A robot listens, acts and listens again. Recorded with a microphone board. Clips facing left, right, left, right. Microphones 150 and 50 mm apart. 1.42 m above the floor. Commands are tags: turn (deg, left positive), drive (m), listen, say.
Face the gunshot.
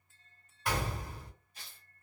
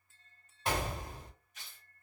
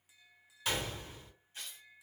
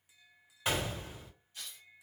<turn deg="-25"/>
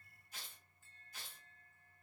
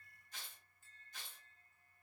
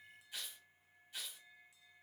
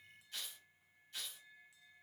<listen/>
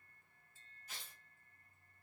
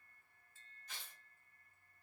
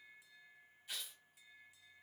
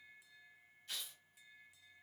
<say>I heard a gunshot, but can't make it out now. It was about straight ahead or 130° right.</say>